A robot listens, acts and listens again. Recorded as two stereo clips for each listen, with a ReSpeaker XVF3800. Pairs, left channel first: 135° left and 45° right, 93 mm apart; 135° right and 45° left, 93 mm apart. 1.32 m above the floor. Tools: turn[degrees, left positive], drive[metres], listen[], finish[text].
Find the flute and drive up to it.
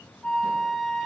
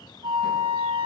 Thought: The flute: 55° left.
Action: turn[55]
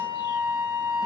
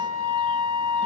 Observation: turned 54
Action: drive[1.0]
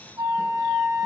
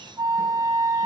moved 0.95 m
Action: drive[1.0]
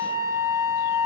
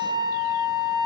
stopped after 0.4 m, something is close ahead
Action: finish[I am next to the flute.]